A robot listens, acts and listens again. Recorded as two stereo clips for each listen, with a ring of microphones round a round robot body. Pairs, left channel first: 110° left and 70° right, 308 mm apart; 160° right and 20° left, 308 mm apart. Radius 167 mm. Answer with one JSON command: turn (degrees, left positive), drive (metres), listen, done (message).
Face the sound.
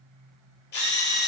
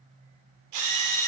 {"turn": 55}
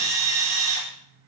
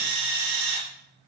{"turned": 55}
{"done": "Found it: a drill, straight ahead."}